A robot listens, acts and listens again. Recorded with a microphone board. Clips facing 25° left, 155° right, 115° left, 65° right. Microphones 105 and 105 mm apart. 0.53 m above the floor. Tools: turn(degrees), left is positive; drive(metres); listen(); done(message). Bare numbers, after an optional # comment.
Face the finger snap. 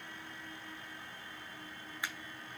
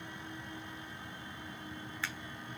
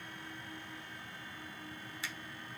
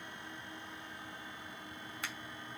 # The finger snap: 50° right.
turn(-50)
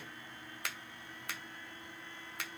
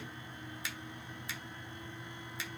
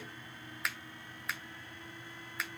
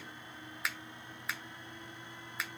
# The finger snap is now 20° left.
turn(20)
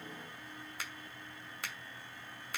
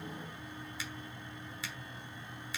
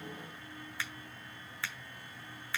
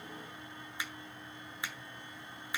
done("Found it: a finger snap, straight ahead, 1 to 2 m away.")